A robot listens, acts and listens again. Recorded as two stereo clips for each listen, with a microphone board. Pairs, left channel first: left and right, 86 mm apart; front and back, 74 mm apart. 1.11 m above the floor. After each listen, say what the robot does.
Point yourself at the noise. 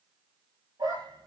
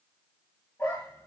Turn 55° right.
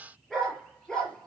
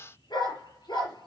Turn 10° left.
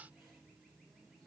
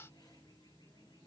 Keep listening.
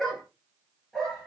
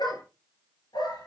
Facing the dog barking.